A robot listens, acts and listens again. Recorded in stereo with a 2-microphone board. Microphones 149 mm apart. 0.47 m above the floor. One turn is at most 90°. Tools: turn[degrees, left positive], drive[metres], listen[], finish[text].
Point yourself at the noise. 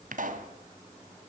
Thought: The pop: about 65° right or 115° right.
Action: turn[-65]
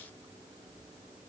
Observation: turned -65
Action: listen[]
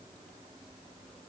Action: finish[I heard a pop, but can't make it out now. It was about straight ahead or 50° right.]